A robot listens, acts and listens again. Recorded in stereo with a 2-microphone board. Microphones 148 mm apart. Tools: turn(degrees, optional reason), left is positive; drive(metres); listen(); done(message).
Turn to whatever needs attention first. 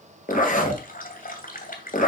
listen()
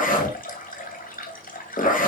listen()
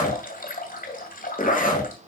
done("I can't make out anything urgent, only a zipper and a running tap.")